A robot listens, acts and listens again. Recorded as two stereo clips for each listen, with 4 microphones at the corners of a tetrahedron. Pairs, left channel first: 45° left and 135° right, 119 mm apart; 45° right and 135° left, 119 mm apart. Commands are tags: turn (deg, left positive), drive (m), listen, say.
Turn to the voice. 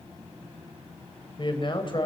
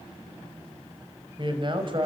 <turn deg="90"/>
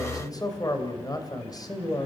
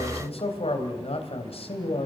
<turn deg="-10"/>
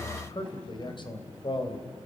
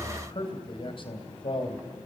<say>Found it: a man speaking, straight ahead.</say>